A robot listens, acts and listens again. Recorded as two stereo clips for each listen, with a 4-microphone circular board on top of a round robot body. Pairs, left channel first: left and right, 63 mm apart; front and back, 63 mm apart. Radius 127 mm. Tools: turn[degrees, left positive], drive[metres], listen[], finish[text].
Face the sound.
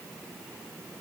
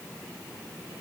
Action: listen[]
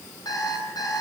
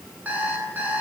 Thought: The alarm clock: 115° left.
Action: turn[115]
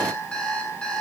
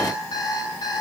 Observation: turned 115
Thought: The alarm clock is now 15° left.
Action: turn[15]
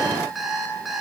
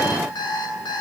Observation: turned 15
Action: finish[Facing the alarm clock, over 4 m away.]